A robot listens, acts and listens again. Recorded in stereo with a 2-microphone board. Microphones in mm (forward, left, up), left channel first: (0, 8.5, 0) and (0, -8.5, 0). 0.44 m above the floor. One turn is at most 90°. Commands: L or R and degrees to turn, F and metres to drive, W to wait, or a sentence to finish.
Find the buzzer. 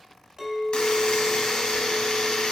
L75
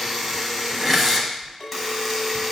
Found it: a buzzer, straight ahead, 1 to 2 m away.